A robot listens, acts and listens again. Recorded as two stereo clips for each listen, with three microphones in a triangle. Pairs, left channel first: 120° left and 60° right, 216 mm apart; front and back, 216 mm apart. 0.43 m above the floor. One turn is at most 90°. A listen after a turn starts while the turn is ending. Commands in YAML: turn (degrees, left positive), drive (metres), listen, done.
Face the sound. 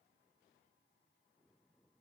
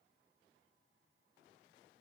listen: true
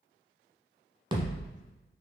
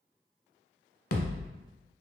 turn: 10
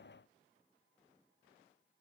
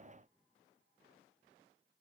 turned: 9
done: "Facing where the thud came from. I can't hear it now."